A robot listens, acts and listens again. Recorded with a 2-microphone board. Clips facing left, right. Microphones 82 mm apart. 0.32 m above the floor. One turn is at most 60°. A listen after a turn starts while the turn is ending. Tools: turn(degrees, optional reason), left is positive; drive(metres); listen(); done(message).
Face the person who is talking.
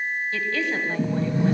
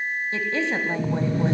turn(degrees=-25, reason="The woman speaking: about 25° right or 155° right.")
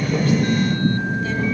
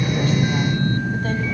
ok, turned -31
listen()
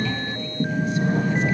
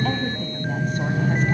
listen()
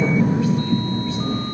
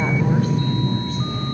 done("I heard a woman speaking, but can't make it out now. It was about 5° left or 125° right.")